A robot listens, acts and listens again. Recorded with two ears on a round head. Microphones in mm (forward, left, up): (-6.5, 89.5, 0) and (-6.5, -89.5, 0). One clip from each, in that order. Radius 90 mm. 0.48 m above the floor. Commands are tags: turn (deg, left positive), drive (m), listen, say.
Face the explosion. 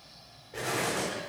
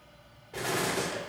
<turn deg="-35"/>
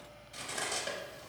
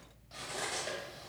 <listen/>
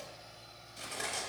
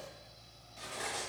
<say>I heard an explosion, but can't make it out now. It was about straight ahead or 110° right.</say>